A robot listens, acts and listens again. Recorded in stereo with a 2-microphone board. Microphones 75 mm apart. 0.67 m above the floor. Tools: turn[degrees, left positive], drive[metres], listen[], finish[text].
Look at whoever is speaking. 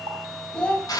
Action: turn[30]
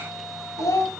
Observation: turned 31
Thought: So it is at 135° left.
Action: turn[135]
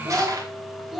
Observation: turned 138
Action: finish[Facing the child speaking.]